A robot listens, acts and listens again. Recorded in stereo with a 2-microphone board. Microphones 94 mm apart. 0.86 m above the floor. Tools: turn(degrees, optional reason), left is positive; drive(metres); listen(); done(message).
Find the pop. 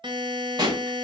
turn(degrees=-50, reason="The pop: about 50° right or 130° right.")
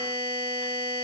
listen()
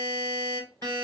done("I heard a pop, but can't make it out now. It was about straight ahead or 80° right.")